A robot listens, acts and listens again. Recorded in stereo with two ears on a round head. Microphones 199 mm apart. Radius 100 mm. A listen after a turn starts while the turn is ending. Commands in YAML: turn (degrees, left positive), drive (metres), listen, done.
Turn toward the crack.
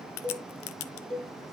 turn: 60
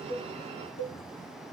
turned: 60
listen: true
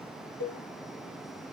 done: "I heard a crack, but can't make it out now. It was about straight ahead or 60° left."